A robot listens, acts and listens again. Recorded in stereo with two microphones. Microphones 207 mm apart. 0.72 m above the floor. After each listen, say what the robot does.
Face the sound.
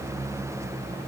Keep listening.
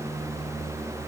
Keep listening.
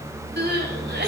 Turn 55° right.
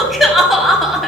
Found it: crying, straight ahead.